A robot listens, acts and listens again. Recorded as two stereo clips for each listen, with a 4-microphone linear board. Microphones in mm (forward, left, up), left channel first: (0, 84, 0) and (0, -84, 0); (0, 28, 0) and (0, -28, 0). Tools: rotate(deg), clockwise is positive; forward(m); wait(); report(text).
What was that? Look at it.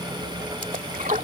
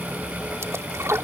rotate(55)
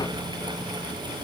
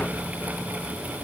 wait()
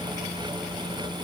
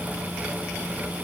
report("I heard a splash, but can't make it out now. It was about straight ahead or 70° right.")